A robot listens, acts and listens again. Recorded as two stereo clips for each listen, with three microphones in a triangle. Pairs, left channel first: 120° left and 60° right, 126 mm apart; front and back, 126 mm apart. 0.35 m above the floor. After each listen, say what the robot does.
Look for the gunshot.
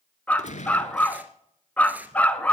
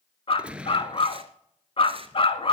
Turn 100° left.
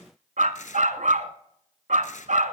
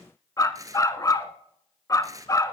Facing where the gunshot came from. I can't hear it now.